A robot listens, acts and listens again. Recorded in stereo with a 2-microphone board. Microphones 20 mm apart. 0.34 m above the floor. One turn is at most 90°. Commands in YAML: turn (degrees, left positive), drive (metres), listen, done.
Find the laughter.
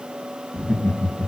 turn: 65
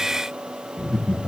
turn: 55
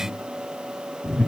turn: 10
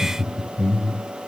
done: "Facing the laughter."